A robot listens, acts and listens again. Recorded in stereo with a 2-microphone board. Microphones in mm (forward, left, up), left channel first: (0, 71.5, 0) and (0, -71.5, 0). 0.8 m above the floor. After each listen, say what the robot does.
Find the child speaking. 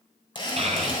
Turn 45° right.
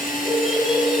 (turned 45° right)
Found it: a child speaking, straight ahead, 2 to 4 m away.